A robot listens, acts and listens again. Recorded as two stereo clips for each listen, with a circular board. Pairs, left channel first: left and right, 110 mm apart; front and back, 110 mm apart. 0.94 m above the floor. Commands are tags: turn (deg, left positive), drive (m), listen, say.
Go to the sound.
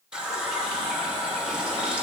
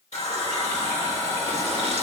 <turn deg="-10"/>
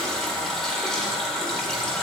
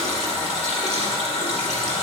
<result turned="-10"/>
<drive m="1.0"/>
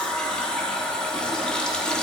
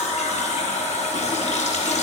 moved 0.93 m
<drive m="1.0"/>
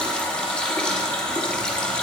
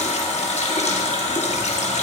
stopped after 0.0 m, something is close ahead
<turn deg="10"/>
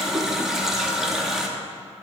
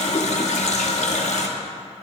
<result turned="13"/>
<say>Arrived at the running tap, straight ahead.</say>